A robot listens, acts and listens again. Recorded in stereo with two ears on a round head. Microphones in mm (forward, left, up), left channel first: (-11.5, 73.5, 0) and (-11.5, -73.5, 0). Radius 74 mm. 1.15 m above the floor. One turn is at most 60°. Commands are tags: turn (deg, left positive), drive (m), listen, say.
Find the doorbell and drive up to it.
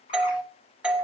<turn deg="-30"/>
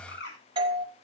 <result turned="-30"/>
<turn deg="-60"/>
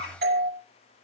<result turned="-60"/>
<turn deg="-60"/>
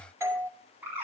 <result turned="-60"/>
<turn deg="-20"/>
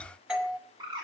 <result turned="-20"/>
<drive m="1.0"/>
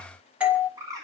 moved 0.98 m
<turn deg="-10"/>
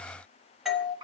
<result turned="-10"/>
<drive m="1.0"/>
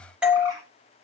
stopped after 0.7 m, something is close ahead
<turn deg="-10"/>
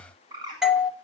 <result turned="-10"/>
<say>I am next to the doorbell.</say>